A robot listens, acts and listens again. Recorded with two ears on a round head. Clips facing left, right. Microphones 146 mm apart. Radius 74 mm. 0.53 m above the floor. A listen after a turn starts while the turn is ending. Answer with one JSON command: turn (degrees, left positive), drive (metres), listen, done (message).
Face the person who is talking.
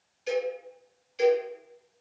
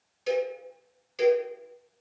{"listen": true}
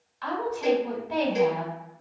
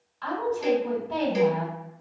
{"turn": 30}
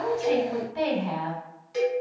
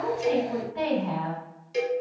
{"turn": 135}
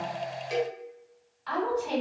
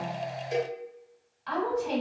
{"done": "Found it: a woman speaking, straight ahead."}